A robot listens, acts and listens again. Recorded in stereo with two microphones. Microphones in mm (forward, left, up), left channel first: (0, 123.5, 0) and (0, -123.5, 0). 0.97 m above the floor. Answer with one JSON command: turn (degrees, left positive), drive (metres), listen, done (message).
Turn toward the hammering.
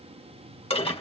{"listen": true}
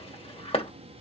{"listen": true}
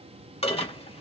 {"done": "I can't make out hammering to turn to."}